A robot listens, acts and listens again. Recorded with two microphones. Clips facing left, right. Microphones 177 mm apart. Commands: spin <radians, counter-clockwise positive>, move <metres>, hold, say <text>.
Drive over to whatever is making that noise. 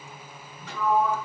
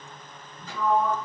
spin 1.31
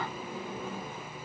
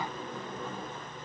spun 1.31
move 1.0
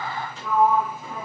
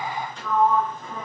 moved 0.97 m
move 1.0
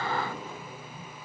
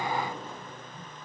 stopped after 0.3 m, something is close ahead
say I am next to the sliding door.